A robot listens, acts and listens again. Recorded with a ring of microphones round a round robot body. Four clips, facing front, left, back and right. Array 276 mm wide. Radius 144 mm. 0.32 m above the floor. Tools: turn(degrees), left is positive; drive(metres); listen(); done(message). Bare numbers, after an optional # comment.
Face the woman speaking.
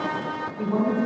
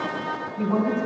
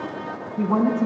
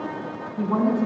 # The woman speaking: 160° right.
turn(-160)
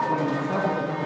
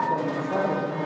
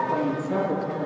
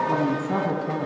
# The woman speaking is now 75° right.
turn(-75)
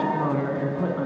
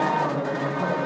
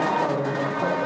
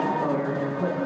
# The woman speaking is now 10° left.
turn(10)
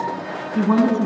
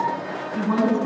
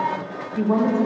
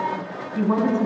done("Facing the woman speaking.")